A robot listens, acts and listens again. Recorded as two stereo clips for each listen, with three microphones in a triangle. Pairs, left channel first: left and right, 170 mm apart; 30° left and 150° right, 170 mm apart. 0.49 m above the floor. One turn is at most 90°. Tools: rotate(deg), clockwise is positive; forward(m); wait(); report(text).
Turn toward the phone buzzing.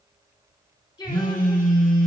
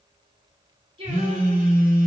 rotate(90)
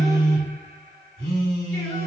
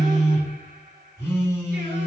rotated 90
rotate(45)
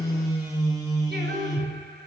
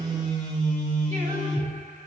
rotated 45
rotate(20)
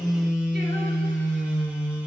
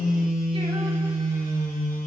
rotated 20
report("Facing the phone buzzing, 1 to 2 m away.")